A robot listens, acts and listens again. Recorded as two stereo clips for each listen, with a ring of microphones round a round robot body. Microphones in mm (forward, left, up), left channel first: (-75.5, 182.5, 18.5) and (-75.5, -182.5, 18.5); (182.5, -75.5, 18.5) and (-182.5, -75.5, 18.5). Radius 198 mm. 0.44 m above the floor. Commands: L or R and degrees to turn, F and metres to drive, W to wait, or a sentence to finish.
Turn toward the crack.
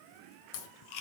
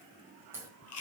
L95
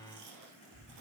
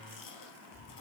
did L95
Facing where the crack came from. I can't hear it now.